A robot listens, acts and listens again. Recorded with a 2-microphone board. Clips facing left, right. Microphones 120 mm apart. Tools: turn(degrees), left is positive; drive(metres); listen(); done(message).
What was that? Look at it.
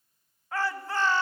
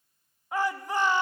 turn(degrees=-15)
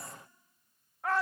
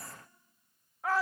done("Facing the shout.")